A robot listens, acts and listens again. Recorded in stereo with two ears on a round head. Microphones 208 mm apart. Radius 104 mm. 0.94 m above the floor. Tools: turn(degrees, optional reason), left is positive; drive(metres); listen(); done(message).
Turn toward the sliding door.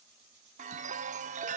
listen()
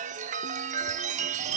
listen()
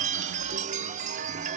done("I can't make out a sliding door, only a chime.")